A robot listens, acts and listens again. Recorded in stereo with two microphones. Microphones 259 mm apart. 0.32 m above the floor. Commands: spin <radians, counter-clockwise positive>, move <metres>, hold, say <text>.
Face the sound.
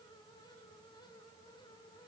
hold
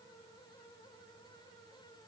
hold
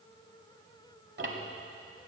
spin -0.87
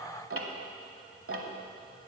spin -1.31
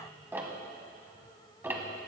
spin -0.17
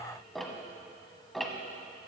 say Facing the ticking, 1 to 2 m away.